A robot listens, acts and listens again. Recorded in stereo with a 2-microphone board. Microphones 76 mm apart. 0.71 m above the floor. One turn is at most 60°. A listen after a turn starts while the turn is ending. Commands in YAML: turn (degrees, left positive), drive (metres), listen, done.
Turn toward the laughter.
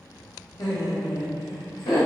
turn: 60
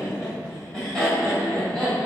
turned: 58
turn: 10
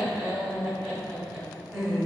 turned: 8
done: "Facing the laughter."